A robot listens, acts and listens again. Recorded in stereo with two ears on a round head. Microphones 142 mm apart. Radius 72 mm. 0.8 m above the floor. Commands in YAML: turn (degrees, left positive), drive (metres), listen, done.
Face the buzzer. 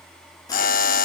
turn: 60
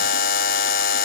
turn: 60
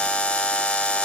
done: "Found it: a buzzer, straight ahead, under 1 m away."